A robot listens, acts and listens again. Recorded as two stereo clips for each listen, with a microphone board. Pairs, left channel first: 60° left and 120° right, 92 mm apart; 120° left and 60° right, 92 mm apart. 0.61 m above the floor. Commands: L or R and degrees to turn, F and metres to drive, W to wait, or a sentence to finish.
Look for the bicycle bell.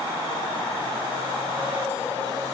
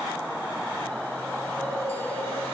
W
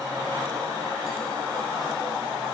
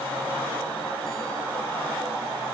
W
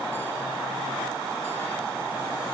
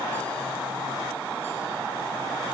I can't make out a bicycle bell.